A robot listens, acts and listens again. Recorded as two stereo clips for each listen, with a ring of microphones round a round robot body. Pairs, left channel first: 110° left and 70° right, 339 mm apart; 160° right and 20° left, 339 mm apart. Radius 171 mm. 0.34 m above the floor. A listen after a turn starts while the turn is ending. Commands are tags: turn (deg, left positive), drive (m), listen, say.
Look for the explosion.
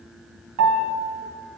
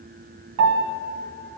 <listen/>
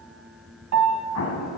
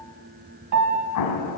<turn deg="160"/>
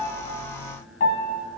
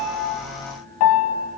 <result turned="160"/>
<say>Facing where the explosion came from. I can't hear it now.</say>